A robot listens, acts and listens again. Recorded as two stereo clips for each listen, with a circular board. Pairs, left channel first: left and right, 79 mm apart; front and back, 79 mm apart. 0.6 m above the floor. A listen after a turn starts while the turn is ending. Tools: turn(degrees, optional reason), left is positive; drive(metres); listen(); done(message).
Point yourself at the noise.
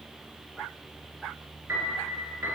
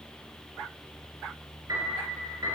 turn(degrees=-145, reason="The piano: 145° right.")
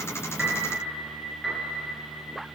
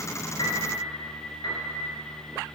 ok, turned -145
done("Facing the piano.")